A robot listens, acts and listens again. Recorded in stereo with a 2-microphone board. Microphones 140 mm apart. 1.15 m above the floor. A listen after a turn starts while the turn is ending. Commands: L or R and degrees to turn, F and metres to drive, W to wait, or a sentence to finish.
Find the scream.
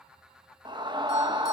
R30
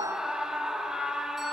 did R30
Facing the scream.